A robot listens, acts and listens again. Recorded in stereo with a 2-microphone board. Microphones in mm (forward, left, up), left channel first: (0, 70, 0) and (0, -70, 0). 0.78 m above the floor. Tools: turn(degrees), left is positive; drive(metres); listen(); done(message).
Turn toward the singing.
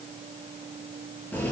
listen()
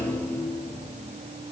listen()
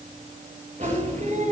turn(degrees=-65)
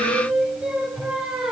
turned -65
done("Found it: singing, straight ahead.")